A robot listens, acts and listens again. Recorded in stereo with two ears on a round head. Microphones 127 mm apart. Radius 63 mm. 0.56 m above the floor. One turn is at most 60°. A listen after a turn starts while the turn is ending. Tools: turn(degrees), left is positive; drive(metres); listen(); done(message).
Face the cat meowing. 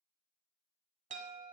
listen()
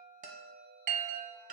listen()
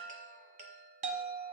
done("I can't make out a cat meowing, only a chime.")